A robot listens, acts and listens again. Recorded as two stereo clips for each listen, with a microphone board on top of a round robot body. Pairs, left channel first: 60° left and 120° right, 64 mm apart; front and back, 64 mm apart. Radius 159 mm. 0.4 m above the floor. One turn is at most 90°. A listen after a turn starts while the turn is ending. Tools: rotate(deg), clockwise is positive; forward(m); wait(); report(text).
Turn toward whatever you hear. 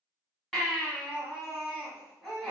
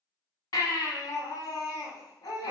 rotate(25)
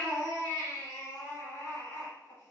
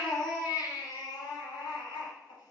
report("Found it: a baby crying, straight ahead, 1 to 2 m away.")